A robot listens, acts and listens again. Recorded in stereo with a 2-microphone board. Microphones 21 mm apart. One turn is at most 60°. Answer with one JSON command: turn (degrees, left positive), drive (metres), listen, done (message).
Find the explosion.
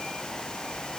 {"listen": true}
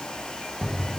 {"turn": -20}
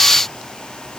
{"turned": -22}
{"listen": true}
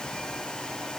{"done": "I heard an explosion, but can't make it out now. It was about straight ahead or 135° right."}